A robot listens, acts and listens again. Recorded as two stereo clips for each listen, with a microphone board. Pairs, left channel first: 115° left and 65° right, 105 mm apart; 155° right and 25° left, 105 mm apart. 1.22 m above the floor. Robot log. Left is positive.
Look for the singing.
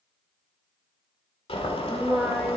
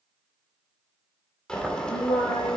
note: The singing: 155° right.
cmd yaw -155
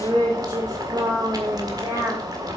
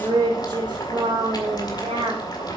end: Found it: singing, straight ahead.